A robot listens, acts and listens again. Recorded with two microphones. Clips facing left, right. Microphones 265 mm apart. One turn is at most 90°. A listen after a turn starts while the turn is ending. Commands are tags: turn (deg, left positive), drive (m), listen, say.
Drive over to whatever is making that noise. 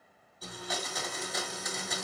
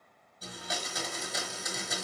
<turn deg="-30"/>
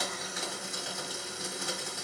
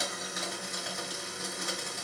<turn deg="-90"/>
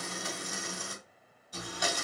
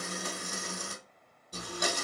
<turn deg="-45"/>
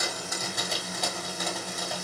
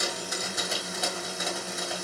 <drive m="1.0"/>
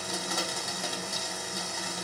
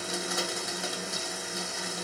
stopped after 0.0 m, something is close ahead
<say>Something is in my way. I am facing the blender but have not reached it.</say>